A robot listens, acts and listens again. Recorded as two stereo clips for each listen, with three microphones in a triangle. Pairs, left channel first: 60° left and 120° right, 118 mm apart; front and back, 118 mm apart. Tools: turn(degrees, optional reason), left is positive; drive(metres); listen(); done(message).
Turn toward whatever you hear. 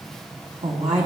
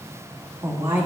turn(degrees=-110, reason="The woman speaking: 110° right.")
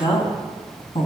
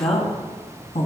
turn(degrees=25, reason="The woman speaking is now 25° left.")
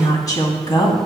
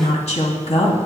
turn(degrees=10, reason="The woman speaking is now 10° left.")
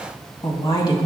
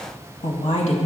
turn(degrees=10, reason="The woman speaking is now 10° left.")
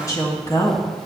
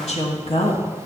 done("Facing the woman speaking.")